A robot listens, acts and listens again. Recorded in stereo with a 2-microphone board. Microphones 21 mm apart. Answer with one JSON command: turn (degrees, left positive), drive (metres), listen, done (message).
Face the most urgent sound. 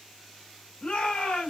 {"turn": 90}
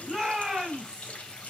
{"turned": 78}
{"turn": 10}
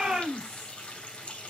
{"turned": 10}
{"done": "Found it: a shout, straight ahead."}